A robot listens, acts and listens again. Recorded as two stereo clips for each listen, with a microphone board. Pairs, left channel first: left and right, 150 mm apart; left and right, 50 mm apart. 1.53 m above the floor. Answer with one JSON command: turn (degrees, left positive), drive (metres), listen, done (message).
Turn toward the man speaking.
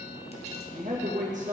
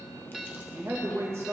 {"turn": -50}
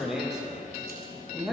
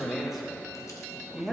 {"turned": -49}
{"done": "Facing the man speaking."}